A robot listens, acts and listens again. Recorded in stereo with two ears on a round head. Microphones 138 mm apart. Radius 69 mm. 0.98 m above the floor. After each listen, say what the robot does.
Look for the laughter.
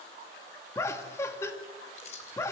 Turn 20° left.
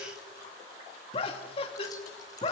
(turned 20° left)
Turn 140° left.
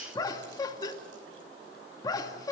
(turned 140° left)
Turn 25° left.
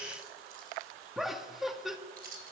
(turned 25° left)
Found it: laughter, straight ahead, 2 to 4 m away.